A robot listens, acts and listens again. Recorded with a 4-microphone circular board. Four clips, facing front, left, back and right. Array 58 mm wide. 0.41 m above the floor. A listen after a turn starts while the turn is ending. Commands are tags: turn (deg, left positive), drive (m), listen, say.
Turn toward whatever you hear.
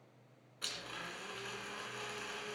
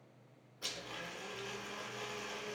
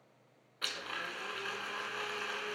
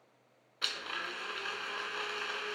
<turn deg="-120"/>
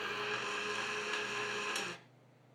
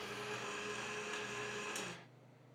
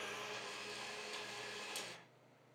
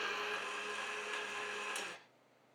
<turn deg="-10"/>
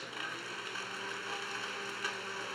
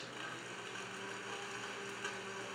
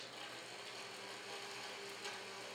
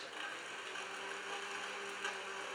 <say>Found it: a blender, straight ahead, 2 to 4 m away.</say>